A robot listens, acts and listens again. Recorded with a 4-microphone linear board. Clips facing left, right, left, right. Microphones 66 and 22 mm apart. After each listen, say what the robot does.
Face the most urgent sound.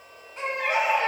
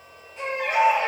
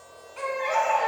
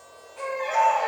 Turn 65° left.
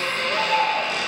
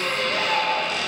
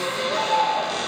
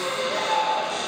Turn 45° left.
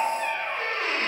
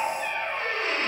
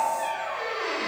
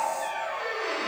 Turn 10° right.
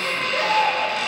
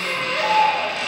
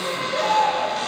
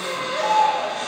Found it: a baby crying, straight ahead, under 1 m away.